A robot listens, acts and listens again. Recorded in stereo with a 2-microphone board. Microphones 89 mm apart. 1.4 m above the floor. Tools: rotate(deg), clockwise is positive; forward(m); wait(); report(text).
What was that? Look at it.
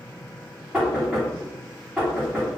rotate(30)
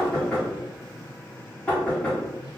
rotate(-20)
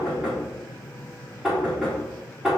report("Found it: knocking, straight ahead.")